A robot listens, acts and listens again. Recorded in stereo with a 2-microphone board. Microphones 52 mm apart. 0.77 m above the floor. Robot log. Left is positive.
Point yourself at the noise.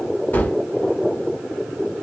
note: The gunshot: about 35° left or 145° left.
cmd yaw +35
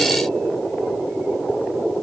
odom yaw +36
cmd idle
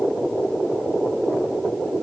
end: I heard a gunshot, but can't make it out now. It was about straight ahead or 110° left.